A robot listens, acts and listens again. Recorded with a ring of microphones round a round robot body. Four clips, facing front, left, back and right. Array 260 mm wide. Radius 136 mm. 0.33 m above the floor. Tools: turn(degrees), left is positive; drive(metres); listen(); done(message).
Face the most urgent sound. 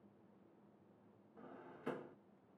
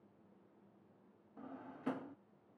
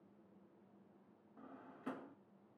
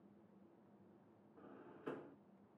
listen()
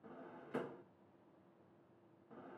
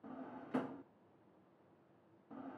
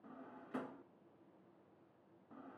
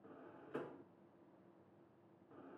listen()
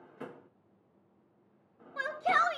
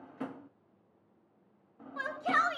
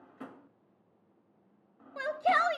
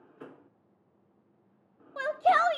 turn(degrees=-125)
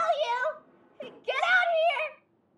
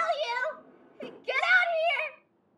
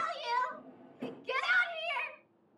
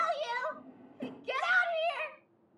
turn(degrees=15)
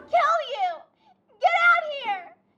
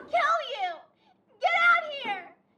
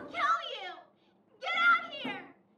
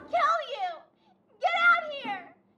done("Found it: a shout, straight ahead.")